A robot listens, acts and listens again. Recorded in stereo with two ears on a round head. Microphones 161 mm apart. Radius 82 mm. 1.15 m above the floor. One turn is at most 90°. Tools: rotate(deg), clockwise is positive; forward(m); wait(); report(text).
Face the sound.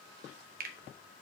rotate(55)
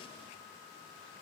wait()
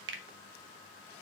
rotate(65)
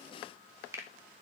rotate(15)
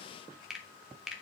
report("Facing the finger snap, under 1 m away.")